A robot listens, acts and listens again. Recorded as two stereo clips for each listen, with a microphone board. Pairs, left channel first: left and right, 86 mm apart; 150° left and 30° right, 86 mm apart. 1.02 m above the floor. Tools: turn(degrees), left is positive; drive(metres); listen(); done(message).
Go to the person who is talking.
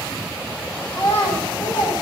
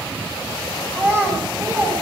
turn(degrees=35)
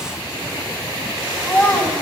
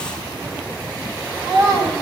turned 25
turn(degrees=10)
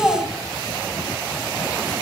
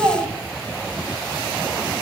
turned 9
drive(metres=1.0)
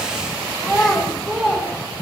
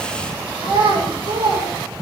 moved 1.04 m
drive(metres=1.0)
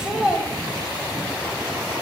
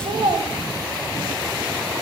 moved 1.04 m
turn(degrees=-10)
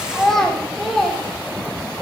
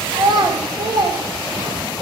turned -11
drive(metres=1.0)
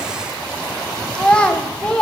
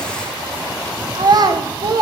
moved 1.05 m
turn(degrees=10)
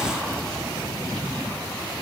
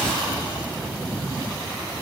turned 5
listen()
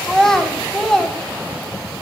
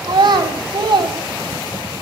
drive(metres=1.0)
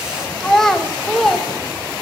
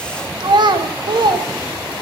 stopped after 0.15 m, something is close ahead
done("Arrived at the child speaking, straight ahead.")